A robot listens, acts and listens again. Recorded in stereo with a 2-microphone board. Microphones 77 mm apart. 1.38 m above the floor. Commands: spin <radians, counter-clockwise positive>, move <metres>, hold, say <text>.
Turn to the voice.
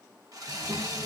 spin -1.05
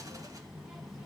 say Facing the child speaking, 1 to 2 m away.